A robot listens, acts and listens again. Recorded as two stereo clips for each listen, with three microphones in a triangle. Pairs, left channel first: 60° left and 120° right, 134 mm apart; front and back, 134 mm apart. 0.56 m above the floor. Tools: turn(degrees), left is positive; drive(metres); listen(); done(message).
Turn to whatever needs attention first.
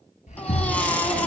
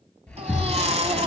turn(degrees=140)
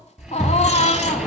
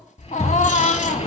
turn(degrees=25)
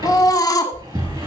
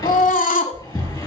done("Found it: a baby crying, straight ahead, 1 to 2 m away.")